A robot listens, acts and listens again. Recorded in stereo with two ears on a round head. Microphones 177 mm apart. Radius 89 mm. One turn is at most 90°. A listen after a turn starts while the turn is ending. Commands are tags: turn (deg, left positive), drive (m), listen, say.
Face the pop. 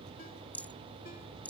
<listen/>
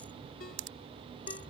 <turn deg="-65"/>
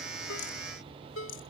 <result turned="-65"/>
<listen/>
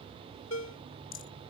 <say>I heard a pop, but can't make it out now. It was about straight ahead or 50° right.</say>